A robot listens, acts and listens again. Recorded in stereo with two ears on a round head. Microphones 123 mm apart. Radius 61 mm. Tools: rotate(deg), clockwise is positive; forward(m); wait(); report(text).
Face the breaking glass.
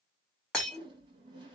rotate(-30)
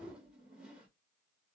wait()
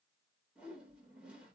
report("I heard breaking glass, but can't make it out now. It was about 25° right or 145° left.")